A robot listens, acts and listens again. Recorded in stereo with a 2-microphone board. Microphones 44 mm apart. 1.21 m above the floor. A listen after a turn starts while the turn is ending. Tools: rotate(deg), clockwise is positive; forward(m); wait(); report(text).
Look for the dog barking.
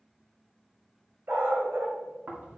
rotate(65)
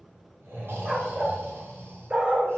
rotate(30)
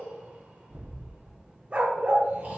rotate(40)
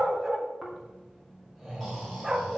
rotate(10)
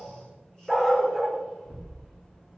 report("Facing the dog barking.")